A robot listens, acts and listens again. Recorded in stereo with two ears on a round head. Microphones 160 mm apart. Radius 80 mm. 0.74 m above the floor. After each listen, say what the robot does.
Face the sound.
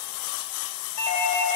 Turn 35° left.
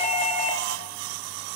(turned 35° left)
Turn 105° left.
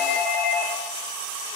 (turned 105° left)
Facing the doorbell.